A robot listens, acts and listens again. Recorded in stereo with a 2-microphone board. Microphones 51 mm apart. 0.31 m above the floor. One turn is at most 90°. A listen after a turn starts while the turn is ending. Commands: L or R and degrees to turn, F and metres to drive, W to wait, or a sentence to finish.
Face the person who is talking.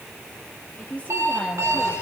L30
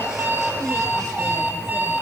W
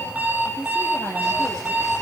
L90
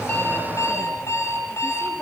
L30
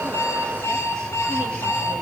W
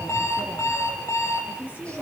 R30
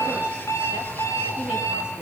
W
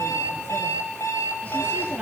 R15
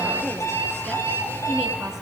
W
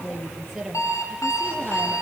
Found it: a woman speaking, straight ahead, over 4 m away.